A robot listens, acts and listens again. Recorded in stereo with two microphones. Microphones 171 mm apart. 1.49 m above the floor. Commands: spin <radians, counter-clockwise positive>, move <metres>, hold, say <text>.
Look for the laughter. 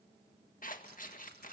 hold
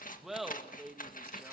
spin 0.52
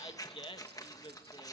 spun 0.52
spin 2.62
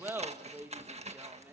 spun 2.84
spin -0.17
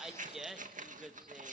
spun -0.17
say Found it: laughter, straight ahead, 2 to 4 m away.